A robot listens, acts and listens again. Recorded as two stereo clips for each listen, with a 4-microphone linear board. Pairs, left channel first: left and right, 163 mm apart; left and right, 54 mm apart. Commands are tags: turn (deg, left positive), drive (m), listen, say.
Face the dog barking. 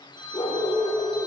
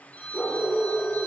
<turn deg="40"/>
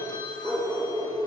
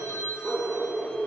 <say>Facing the dog barking.</say>